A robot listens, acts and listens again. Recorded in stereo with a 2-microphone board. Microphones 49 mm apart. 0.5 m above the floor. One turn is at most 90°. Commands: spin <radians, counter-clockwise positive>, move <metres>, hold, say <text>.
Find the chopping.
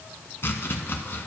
spin 0.96
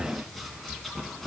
say Found it: chopping, straight ahead, 1 to 2 m away.